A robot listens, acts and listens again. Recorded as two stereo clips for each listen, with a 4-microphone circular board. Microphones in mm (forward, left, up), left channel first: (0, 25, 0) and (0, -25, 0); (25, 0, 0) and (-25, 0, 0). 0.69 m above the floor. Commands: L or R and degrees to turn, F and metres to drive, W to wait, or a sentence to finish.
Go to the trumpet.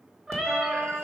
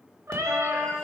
R130
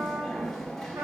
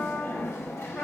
R55
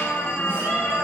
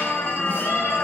W
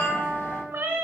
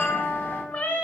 R15
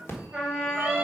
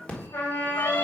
F1.0
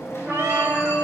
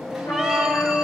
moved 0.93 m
R10
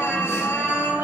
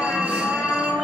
F1.0
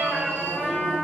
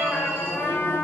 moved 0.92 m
F1.0
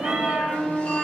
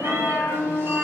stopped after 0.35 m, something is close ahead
Arrived at the trumpet, straight ahead.